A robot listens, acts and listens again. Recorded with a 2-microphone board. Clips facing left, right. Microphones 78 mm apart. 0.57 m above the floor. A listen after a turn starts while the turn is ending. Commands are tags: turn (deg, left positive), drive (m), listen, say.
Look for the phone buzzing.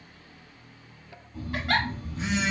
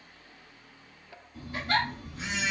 <turn deg="35"/>
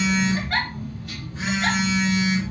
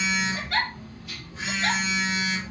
<turn deg="110"/>
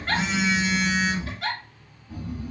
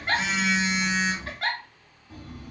<turn deg="10"/>
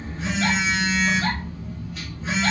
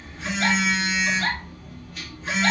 <say>Facing the phone buzzing.</say>